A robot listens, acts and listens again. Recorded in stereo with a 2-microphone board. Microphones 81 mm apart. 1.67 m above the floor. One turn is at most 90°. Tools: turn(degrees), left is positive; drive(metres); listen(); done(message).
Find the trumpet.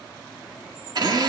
listen()
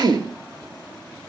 listen()
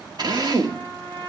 turn(degrees=-65)
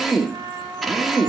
turn(degrees=-45)
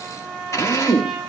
done("Found it: a trumpet, straight ahead, over 4 m away.")